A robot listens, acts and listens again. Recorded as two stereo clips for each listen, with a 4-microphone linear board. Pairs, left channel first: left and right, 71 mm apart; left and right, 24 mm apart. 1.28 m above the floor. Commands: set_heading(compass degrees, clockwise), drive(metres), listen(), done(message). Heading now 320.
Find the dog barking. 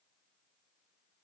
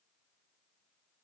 listen()
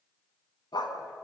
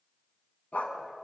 set_heading(250)
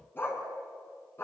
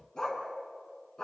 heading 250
set_heading(215)
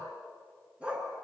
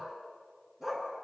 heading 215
set_heading(230)
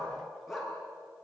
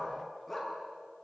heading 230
done("Found it: a dog barking, straight ahead, over 4 m away.")